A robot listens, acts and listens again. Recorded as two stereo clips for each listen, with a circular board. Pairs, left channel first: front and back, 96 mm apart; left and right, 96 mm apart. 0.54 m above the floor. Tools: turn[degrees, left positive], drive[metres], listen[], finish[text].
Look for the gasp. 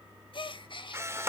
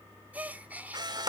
Thought: The gasp: 20° right.
Action: turn[-20]
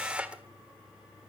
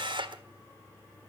Action: finish[Facing where the gasp came from. I can't hear it now.]